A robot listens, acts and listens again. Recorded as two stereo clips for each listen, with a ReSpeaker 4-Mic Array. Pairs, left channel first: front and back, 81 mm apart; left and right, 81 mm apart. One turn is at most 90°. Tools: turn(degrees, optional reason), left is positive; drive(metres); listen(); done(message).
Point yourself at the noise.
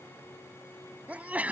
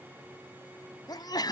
turn(degrees=90, reason="The sneeze: 110° left.")
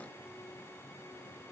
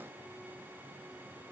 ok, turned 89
turn(degrees=20, reason="Nothing new. It was at 20° left.")
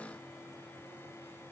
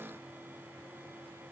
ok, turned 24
done("Facing where the sneeze came from. I can't hear it now.")